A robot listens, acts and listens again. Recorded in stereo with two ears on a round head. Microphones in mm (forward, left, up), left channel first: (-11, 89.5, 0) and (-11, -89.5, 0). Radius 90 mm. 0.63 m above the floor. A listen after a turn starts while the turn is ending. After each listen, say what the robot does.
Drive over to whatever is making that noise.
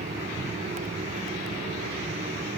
Keep listening.
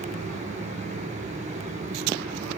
Keep listening.
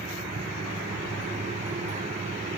I can't make out anything to turn to.